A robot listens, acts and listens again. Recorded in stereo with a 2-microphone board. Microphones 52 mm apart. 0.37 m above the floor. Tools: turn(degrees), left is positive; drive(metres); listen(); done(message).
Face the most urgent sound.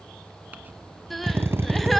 turn(degrees=30)
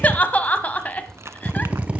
turn(degrees=150)
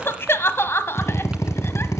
turn(degrees=50)
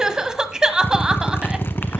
turn(degrees=-15)
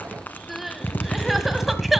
done("Found it: crying, straight ahead.")